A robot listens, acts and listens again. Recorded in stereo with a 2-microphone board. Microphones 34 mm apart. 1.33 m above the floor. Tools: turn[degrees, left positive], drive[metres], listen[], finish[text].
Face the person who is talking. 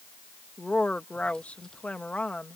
Thought: The woman speaking: about 40° left or 140° left.
Action: turn[40]
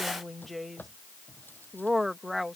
Action: finish[Found it: a woman speaking, straight ahead.]